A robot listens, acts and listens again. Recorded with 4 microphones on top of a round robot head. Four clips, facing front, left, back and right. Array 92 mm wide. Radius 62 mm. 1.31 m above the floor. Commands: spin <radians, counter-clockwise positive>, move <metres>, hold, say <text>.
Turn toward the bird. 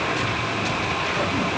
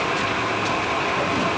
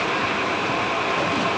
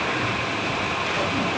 hold
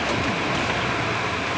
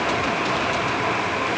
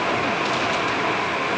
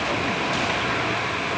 hold
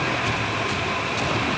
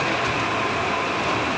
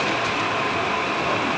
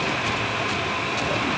say I can't make out a bird to turn to.